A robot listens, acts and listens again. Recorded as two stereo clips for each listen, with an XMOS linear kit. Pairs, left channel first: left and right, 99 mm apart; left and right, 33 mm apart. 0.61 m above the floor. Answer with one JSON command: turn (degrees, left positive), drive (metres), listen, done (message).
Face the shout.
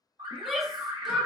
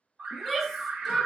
{"turn": 30}
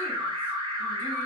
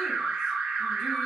{"listen": true}
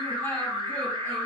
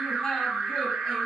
{"listen": true}
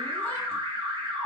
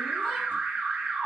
{"done": "I heard a shout, but can't make it out now. It was about 30° right or 150° left."}